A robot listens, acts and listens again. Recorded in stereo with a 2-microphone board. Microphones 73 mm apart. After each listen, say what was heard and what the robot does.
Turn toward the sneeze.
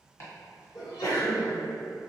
The sneeze: about 50° left or 130° left. Turn 50° left.
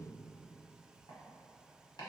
Keep listening.
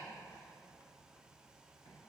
I heard a sneeze, but can't make it out now. It was about straight ahead or 80° left.